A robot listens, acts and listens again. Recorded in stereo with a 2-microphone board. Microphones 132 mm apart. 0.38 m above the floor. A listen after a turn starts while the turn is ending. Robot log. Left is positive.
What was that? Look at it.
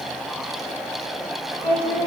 note: The singing: about 45° left or 135° left.
cmd yaw +45
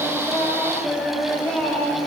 note: So it is at 10° left.
cmd yaw +10
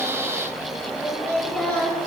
note: The singing is now 15° left.
cmd yaw +15
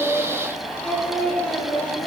end: Facing the singing, 2 to 4 m away.